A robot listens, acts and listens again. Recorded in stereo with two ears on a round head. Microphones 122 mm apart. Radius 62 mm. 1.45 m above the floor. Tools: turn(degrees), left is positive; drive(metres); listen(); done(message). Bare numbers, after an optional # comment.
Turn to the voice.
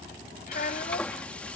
# The child speaking: about 55° left or 125° left.
turn(55)
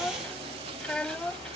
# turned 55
done("Facing the child speaking.")